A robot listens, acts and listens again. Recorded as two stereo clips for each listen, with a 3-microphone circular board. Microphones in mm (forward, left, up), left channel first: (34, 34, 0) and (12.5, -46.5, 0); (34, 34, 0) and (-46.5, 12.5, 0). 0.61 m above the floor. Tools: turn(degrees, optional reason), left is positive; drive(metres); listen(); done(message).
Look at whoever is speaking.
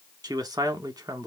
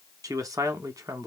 turn(degrees=-135, reason="The man speaking: 135° right.")
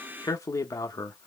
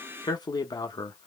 turn(degrees=30, reason="The man speaking is now 30° left.")
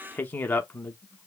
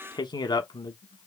turn(degrees=10, reason="The man speaking is now 10° left.")
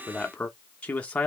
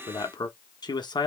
done("Found it: a man speaking, straight ahead, under 1 m away.")